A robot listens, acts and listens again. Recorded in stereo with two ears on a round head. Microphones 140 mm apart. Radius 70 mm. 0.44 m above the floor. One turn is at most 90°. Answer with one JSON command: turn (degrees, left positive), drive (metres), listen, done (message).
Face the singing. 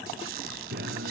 {"turn": -65}
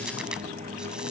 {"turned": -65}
{"turn": -50}
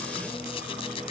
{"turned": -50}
{"listen": true}
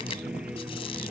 {"done": "Facing the singing."}